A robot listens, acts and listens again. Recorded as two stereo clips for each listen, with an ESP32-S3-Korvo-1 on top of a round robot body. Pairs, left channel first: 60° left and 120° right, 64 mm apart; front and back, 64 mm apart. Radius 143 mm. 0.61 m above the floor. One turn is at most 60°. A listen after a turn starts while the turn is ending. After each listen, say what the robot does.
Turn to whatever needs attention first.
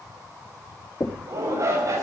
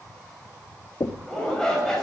Turn 60° right.
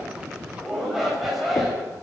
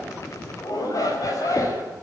Turn 30° right.
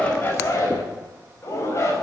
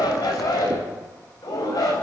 Turn 15° left.
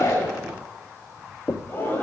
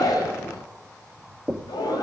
Found it: a shout, straight ahead, over 4 m away.